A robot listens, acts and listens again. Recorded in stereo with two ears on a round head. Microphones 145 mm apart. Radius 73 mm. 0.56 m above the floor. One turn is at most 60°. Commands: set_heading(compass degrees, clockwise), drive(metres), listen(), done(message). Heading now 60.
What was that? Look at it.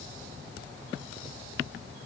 listen()
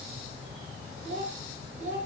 set_heading(105)
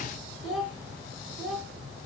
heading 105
done("Found it: a child speaking, straight ahead.")